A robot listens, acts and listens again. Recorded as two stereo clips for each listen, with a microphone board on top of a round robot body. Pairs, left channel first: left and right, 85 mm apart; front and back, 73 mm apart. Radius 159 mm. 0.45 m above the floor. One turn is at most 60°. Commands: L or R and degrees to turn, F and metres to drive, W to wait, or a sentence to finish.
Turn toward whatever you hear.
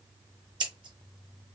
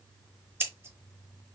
R60
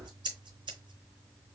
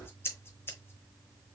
R60
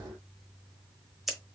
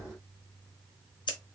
Found it: scissors, straight ahead, 1 to 2 m away.